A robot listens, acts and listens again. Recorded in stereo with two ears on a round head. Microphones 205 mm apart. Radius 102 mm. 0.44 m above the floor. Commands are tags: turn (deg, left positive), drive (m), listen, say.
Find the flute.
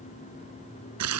<listen/>
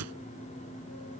<listen/>
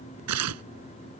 <say>I can't make out a flute, only tearing paper.</say>